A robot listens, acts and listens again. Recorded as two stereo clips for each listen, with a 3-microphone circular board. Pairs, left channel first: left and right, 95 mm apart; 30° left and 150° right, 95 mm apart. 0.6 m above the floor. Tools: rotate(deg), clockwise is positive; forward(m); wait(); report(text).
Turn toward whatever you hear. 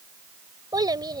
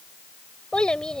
rotate(50)
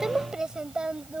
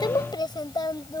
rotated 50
rotate(10)
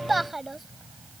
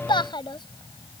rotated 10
report("Facing the child speaking.")